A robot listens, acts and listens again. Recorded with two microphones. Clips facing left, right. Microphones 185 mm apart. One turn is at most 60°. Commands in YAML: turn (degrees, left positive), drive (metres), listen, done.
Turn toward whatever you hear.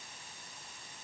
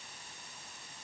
listen: true
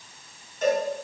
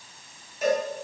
turn: -30
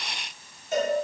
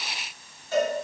turn: 20
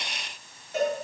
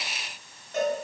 done: "Found it: a cowbell, straight ahead."